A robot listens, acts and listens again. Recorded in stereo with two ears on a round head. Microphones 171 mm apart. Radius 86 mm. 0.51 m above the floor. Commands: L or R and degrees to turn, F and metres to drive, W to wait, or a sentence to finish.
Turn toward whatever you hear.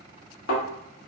L65
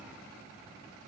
W
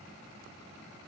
I heard a thud, but can't make it out now. It was about straight ahead or 50° left.